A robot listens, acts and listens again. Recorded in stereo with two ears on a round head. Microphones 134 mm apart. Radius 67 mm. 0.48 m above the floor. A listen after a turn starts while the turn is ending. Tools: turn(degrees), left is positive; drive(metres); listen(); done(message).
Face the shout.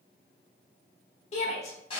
turn(degrees=45)
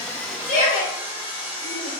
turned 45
turn(degrees=75)
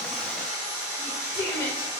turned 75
turn(degrees=25)
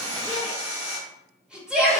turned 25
turn(degrees=-10)
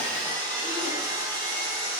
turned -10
listen()
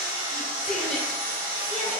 listen()
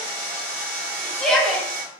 done("Facing the shout.")